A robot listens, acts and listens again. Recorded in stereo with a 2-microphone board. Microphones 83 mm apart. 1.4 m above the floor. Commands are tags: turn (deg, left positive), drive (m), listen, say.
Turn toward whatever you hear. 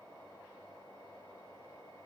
<listen/>
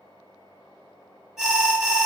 <turn deg="-30"/>
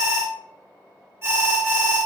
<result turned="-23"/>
<turn deg="-145"/>
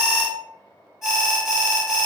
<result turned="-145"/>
<say>Found it: an alarm, straight ahead, 1 to 2 m away.</say>